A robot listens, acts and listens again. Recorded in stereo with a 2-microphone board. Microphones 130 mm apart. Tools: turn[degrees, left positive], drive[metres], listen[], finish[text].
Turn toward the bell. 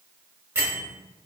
Thought: The bell: about 15° right or 165° right.
Action: turn[-15]
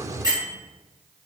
Thought: So it is at 150° right.
Action: turn[-150]
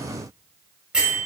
Thought: The bell is now 10° right.
Action: turn[-10]
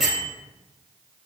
Action: finish[Found it: a bell, straight ahead.]